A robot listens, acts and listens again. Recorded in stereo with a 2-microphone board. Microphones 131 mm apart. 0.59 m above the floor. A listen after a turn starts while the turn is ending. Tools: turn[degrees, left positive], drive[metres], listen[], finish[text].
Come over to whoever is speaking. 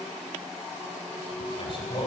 Thought: The man speaking: about 45° left or 135° left.
Action: turn[45]
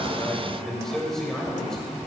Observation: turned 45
Action: drive[1.0]
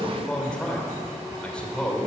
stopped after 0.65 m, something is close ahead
Thought: The man speaking is now 10° left.
Action: turn[10]
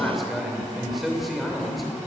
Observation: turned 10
Action: finish[Blocked. The man speaking is further on, straight ahead.]